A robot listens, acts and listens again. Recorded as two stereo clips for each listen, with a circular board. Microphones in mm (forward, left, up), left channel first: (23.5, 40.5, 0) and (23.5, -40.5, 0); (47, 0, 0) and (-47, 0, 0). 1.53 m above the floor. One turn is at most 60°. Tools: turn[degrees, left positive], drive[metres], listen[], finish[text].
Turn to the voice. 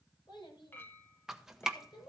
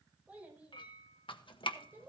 Thought: The child speaking: 110° left.
Action: turn[60]
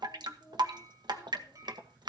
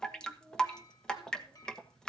Thought: The child speaking is now 40° left.
Action: turn[40]
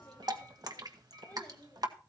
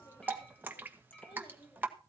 Thought: The child speaking is now 25° left.
Action: turn[25]
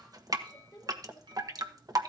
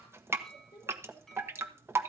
Thought: The child speaking is now 20° left.
Action: turn[20]
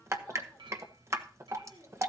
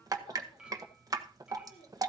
Action: finish[Found it: a child speaking, straight ahead.]